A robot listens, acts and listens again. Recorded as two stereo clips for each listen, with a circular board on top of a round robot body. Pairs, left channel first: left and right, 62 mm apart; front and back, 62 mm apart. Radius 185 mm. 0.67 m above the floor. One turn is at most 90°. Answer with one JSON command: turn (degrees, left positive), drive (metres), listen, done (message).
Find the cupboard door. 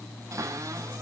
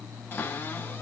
{"turn": -55}
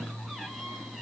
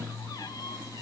{"done": "Found it: a cupboard door, straight ahead, over 4 m away."}